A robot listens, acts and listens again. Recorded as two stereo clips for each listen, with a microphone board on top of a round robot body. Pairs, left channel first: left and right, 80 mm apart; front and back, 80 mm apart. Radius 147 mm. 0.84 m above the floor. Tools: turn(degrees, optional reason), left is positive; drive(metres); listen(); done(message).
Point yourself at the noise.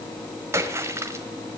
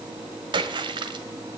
turn(degrees=-150, reason="The splash: 150° right.")
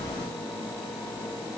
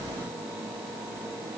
done("I heard a splash from this way, but can't make it out now.")